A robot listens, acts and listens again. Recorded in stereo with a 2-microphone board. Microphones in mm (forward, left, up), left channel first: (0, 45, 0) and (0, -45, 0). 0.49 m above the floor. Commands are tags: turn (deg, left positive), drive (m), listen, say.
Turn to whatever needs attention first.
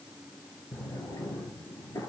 <listen/>
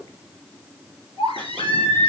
<turn deg="75"/>
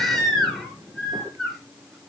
<say>Facing the baby crying.</say>